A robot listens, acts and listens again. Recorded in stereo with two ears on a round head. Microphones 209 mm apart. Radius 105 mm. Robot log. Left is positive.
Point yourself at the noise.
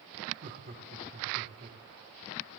note: The laughter: about 40° right or 140° right.
cmd yaw -40
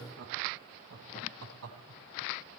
note: So it is at 110° right.
cmd yaw -110
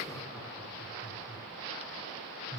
end: Facing the laughter, over 4 m away.